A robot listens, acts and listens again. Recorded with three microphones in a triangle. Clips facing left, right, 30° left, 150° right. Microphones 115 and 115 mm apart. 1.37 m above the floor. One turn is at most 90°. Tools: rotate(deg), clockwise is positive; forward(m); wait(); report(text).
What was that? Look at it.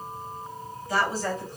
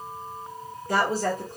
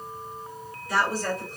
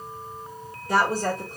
rotate(90)
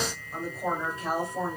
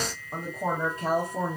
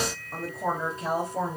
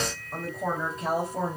rotate(65)
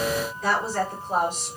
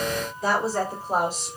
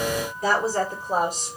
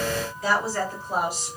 rotate(15)
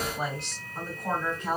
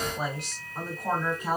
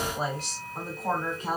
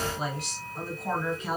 rotate(10)
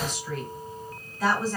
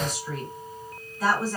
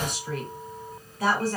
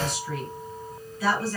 report("Facing the woman speaking.")